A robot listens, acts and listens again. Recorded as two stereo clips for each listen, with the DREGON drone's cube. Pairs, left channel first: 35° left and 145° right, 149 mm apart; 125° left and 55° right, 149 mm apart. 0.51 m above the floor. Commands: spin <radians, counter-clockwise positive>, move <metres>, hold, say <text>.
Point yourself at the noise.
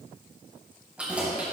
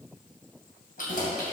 spin 2.36
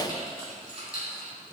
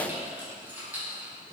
spin 0.44
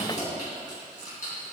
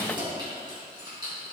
say Facing the keys jangling, 2 to 4 m away.